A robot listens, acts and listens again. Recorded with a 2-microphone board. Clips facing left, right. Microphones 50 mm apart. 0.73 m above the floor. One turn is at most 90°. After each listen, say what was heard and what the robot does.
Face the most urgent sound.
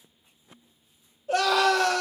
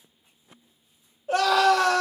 The scream: about 30° right or 150° right. Turn 30° right.
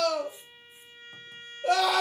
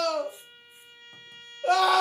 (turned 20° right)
So it is at 125° right. Turn 90° right.
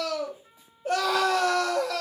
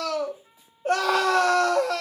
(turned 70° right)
The scream is now 55° right. Turn 55° right.
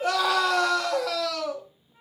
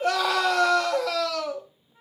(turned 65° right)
The scream is now 10° left. Turn 10° left.
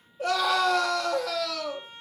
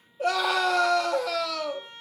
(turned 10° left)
Found it: a scream, straight ahead, under 1 m away.